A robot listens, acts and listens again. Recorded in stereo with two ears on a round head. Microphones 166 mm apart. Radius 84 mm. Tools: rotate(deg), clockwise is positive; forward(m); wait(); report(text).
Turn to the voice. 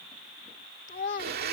rotate(-40)
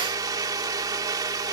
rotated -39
wait()
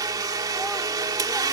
wait()
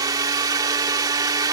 report("I heard a child speaking, but can't make it out now. It was about straight ahead or 100° left.")